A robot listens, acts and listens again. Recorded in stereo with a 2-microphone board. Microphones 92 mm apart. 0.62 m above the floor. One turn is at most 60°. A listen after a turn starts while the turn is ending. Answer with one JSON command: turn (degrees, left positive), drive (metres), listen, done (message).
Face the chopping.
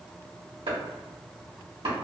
{"turn": -60}
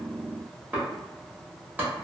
{"turn": -15}
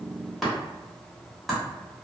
{"done": "Facing the chopping, 1 to 2 m away."}